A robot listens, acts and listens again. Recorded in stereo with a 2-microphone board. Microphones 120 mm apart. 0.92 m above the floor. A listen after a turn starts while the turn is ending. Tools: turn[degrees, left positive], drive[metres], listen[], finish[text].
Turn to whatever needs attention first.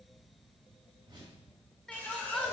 Action: turn[30]
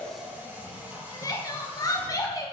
Thought: So it is at 145° left.
Action: turn[145]
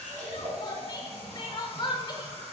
Thought: The crying is now 45° left.
Action: turn[45]
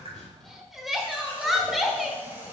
Action: finish[Found it: crying, straight ahead, 1 to 2 m away.]